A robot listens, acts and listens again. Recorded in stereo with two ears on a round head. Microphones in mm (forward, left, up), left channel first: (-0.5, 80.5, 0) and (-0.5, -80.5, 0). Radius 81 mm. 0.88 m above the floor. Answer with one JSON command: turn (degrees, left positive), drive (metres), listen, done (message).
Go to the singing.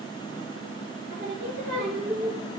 {"turn": -75}
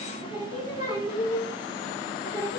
{"turn": -25}
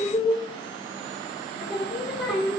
{"drive": 1.0}
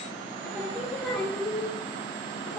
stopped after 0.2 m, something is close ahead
{"done": "Blocked. The singing is further on, straight ahead."}